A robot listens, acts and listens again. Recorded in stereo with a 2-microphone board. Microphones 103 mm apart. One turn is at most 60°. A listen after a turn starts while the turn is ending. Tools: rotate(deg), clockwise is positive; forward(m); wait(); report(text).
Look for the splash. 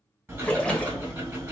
rotate(-30)
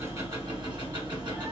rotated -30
wait()
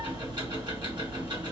report("I heard a splash, but can't make it out now. It was about 20° right or 140° left.")